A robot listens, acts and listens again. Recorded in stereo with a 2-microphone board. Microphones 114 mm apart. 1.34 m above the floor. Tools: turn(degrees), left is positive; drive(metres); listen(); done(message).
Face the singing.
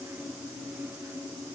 listen()
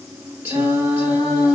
turn(degrees=-20)
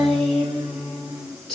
done("Facing the singing, over 4 m away.")